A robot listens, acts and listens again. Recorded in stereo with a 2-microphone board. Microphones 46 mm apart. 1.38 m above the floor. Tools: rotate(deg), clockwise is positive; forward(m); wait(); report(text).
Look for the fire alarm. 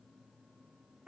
wait()
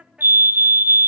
rotate(55)
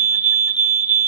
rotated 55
rotate(50)
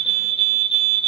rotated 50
report("Found it: a fire alarm, straight ahead.")